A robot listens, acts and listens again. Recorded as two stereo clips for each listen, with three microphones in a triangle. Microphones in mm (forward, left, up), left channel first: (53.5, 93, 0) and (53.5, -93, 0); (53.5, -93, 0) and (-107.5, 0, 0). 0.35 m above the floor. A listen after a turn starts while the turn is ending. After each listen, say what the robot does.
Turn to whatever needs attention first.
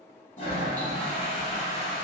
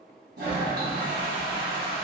Keep listening.
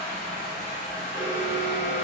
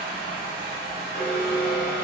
Turn 15° left.
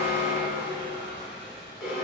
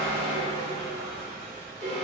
Facing the alarm.